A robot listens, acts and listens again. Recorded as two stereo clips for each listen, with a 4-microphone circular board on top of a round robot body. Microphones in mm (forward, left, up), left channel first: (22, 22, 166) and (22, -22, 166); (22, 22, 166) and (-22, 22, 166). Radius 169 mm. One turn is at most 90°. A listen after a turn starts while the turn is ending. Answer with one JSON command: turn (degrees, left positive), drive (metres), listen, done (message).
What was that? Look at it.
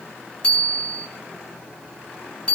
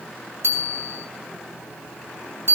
{"turn": 90}
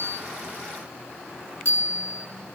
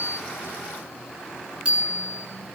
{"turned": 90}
{"turn": 90}
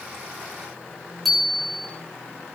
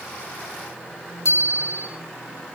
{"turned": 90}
{"done": "Found it: a bicycle bell, straight ahead, over 4 m away."}